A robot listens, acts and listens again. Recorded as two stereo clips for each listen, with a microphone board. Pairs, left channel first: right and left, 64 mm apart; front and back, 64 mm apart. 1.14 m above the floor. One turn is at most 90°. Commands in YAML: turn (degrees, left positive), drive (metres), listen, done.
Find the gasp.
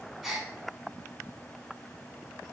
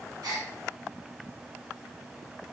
turn: 90
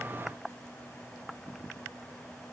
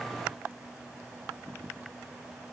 turn: 85
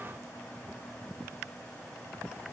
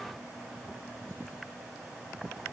done: "Facing where the gasp came from. I can't hear it now."